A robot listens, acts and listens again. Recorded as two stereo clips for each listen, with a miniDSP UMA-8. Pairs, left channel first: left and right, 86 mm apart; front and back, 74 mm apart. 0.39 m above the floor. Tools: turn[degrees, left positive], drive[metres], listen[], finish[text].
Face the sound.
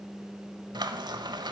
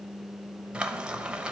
Thought: The frying: 105° right.
Action: turn[-105]
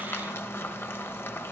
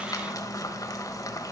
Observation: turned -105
Thought: The frying is now 30° left.
Action: turn[30]
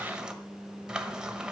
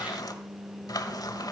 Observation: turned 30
Thought: The frying is now 10° right.
Action: turn[-10]
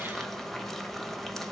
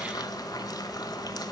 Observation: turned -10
Action: finish[Facing the frying, 1 to 2 m away.]